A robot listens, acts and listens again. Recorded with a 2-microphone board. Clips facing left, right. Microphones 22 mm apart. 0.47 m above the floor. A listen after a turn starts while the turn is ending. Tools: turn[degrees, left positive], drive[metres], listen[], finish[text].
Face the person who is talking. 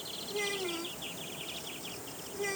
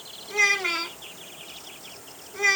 Thought: The child speaking: about 70° right or 110° right.
Action: turn[-70]
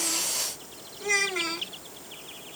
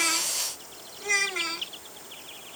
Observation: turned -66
Action: finish[Found it: a child speaking, straight ahead.]